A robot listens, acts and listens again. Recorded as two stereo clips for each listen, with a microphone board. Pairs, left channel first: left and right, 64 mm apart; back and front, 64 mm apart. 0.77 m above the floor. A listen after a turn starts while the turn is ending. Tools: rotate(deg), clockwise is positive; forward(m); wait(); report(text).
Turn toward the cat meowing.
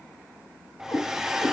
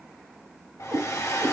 rotate(-55)
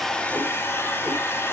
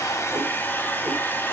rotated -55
wait()
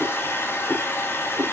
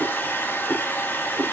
rotate(30)
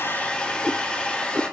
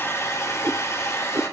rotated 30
rotate(15)
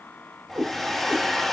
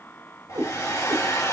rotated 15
report("Found it: a cat meowing, straight ahead, 2 to 4 m away.")